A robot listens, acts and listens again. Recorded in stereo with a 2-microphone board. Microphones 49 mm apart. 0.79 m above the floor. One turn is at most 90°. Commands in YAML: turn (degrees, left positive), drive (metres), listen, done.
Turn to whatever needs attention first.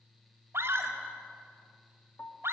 turn: -55
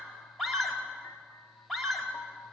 done: "Facing the scream."